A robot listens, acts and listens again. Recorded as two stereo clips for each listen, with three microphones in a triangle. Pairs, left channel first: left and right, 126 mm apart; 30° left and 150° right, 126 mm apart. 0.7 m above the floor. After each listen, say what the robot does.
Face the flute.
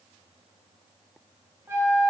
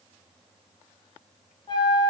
Turn 20° right.
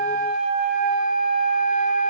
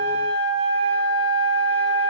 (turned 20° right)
Facing the flute.